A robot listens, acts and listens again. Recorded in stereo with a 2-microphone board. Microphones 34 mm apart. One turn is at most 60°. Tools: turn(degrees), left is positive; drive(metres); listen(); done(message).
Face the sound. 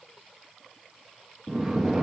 turn(degrees=-30)
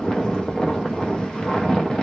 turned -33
turn(degrees=30)
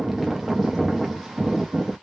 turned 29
done("Facing the snoring, under 1 m away.")